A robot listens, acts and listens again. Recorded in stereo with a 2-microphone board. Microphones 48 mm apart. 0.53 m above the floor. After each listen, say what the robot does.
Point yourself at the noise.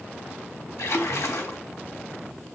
Turn 90° left.
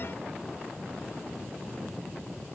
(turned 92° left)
Facing where the splash came from. I can't hear it now.